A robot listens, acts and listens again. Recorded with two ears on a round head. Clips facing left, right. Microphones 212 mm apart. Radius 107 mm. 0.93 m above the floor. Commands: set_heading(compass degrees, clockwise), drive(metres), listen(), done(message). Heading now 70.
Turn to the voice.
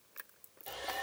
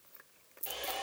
listen()
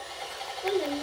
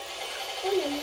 set_heading(55)
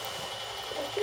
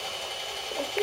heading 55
listen()
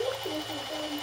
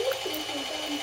done("Facing the child speaking, 1 to 2 m away.")